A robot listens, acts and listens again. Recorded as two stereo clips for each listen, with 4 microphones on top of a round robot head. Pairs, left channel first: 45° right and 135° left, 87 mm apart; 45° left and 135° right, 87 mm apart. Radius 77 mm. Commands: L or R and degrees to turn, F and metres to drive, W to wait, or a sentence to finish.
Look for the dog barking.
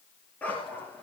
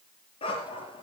L25
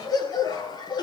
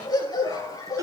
Found it: a dog barking, straight ahead.